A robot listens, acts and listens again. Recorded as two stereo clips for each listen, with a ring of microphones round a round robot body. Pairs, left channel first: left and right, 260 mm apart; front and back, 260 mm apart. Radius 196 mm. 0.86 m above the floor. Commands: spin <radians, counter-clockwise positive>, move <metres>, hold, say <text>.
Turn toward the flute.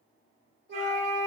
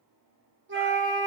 spin -2.44
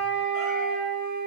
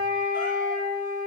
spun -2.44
spin 0.35
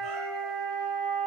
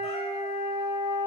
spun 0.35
say Facing the flute, 1 to 2 m away.